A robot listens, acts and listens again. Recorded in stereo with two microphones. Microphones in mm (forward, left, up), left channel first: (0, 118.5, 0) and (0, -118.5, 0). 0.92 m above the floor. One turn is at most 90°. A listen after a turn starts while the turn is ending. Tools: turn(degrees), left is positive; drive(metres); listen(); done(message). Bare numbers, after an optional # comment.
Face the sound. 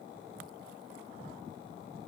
listen()
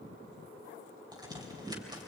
# The crack: about 15° right or 165° right.
turn(-15)
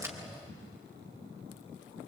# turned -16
listen()
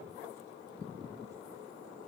done("I heard a crack, but can't make it out now. It was about straight ahead or 145° right.")